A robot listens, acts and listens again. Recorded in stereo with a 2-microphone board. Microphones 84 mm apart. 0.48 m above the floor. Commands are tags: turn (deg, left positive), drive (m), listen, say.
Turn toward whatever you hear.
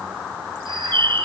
<turn deg="-70"/>
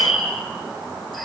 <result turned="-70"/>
<say>Facing the bird.</say>